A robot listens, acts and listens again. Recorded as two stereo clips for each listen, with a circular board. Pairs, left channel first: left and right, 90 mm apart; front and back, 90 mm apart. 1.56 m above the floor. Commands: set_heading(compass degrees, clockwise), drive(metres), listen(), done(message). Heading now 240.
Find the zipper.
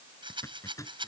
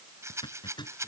set_heading(205)
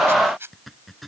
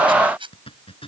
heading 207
done("Found it: a zipper, straight ahead.")